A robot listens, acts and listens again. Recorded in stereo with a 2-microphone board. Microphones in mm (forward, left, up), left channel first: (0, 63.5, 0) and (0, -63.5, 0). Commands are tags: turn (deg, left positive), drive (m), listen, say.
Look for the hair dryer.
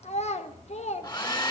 <turn deg="35"/>
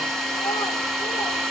<say>Facing the hair dryer, 2 to 4 m away.</say>